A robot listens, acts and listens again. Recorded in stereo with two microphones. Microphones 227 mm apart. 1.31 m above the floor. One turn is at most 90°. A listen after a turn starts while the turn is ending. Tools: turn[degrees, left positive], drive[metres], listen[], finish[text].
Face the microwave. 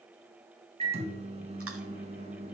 Thought: The microwave: about 25° right or 155° right.
Action: turn[-25]
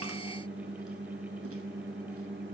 Thought: So it is at 130° right.
Action: turn[-90]
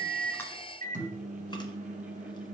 Thought: The microwave is now 30° right.
Action: turn[-30]
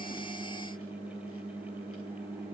Thought: The microwave is now 25° left.
Action: turn[25]
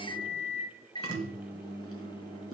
Thought: The microwave is now 20° left.
Action: turn[20]
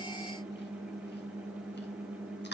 Action: finish[Found it: a microwave, straight ahead, 1 to 2 m away.]